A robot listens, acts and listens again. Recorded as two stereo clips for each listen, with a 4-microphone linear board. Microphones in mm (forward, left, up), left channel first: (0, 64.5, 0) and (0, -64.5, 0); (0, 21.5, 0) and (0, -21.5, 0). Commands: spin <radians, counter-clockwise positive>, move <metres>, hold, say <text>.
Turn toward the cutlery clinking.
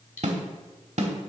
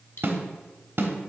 spin 1.57
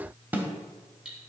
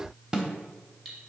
say Facing the cutlery clinking.